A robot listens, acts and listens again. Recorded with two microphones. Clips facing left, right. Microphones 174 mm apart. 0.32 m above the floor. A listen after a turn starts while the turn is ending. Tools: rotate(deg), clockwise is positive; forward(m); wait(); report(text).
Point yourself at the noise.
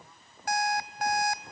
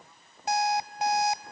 rotate(25)
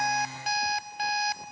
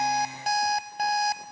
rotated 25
rotate(125)
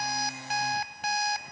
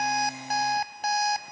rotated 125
rotate(50)
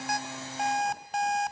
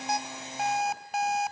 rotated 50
report("Found it: an alarm clock, straight ahead, under 1 m away.")